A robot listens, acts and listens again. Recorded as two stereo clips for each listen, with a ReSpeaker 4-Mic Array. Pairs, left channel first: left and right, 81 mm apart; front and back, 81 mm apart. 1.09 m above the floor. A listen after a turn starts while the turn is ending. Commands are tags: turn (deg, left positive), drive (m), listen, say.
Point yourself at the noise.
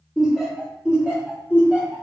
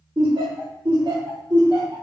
<turn deg="-165"/>
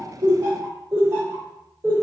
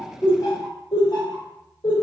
<turn deg="-30"/>
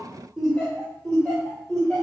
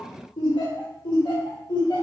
<say>Found it: laughter, straight ahead, 2 to 4 m away.</say>